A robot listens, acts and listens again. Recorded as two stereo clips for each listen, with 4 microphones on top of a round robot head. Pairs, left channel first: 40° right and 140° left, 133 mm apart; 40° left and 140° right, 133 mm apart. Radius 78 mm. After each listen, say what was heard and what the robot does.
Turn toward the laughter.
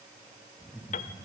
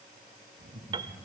The laughter: 125° right. Turn 125° right.
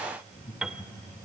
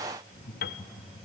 The laughter is now 10° left. Turn 10° left.
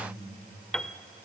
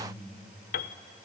Found it: laughter, straight ahead.